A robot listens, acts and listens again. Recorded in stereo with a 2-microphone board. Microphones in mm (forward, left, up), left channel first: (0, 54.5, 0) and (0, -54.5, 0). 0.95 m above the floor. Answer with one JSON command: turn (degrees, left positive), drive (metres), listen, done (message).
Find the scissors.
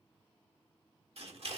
{"turn": -65}
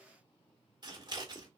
{"turn": -45}
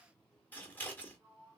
{"turn": 15}
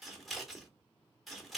{"done": "Facing the scissors, 1 to 2 m away."}